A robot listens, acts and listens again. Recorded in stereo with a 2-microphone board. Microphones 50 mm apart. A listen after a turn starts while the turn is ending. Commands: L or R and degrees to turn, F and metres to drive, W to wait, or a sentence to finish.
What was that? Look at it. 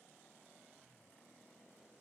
W
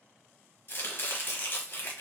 L50
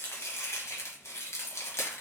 L80
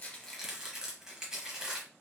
R10
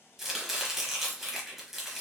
Facing the chopping.